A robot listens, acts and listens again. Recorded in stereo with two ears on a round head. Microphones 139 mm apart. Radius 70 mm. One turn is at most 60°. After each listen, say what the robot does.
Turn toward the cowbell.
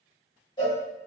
Turn 30° left.
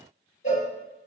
Turn 60° left.
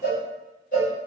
Turn 60° left.
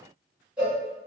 Turn 10° right.
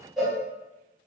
Facing the cowbell.